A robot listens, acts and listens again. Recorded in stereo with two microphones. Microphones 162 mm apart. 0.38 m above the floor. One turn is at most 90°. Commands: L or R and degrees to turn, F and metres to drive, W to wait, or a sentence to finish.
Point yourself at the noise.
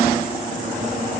W
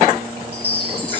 R30
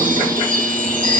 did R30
R90
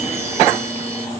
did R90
R30
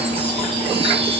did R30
W
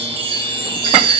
L30
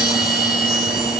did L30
Facing the chime, over 4 m away.